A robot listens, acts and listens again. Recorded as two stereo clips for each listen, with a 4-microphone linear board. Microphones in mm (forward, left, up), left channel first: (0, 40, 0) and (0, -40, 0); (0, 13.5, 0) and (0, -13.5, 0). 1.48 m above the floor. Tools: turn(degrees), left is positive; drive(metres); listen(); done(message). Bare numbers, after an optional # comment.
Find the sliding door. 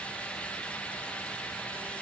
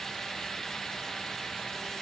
listen()
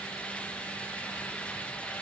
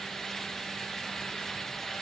listen()
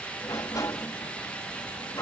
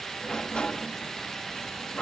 # The sliding door: about 45° left or 135° left.
turn(45)
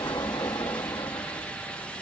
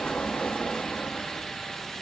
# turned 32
# So it is at 90° left.
turn(90)
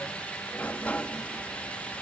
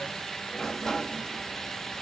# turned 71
# The sliding door is now 20° left.
turn(20)
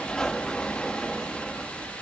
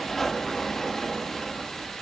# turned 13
# The sliding door is now 10° left.
turn(10)
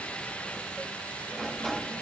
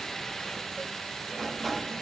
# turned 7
done("Facing the sliding door.")